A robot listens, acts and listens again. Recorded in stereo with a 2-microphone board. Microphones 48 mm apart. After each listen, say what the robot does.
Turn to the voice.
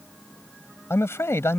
Turn 75° left.
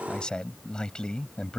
Turn 20° left.
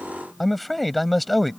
Found it: a man speaking, straight ahead.